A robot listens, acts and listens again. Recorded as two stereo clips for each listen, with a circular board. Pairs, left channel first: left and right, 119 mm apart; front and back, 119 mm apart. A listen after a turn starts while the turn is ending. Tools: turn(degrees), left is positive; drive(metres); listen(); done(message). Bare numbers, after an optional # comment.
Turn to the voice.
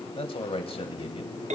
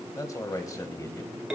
# The man speaking: 60° left.
turn(60)
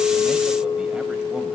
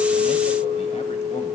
listen()
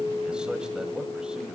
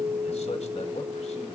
listen()
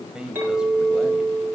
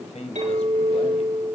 # The man speaking is now 10° right.
turn(-10)
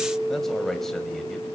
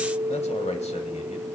done("Facing the man speaking, 1 to 2 m away.")